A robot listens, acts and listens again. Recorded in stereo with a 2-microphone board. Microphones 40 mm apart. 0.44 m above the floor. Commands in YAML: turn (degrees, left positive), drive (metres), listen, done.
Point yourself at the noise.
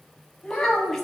turn: 30
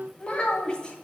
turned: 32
turn: 155
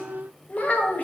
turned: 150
turn: 45
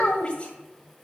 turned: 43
turn: 30
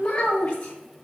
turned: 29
turn: 20
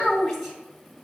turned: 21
done: "Facing the child speaking."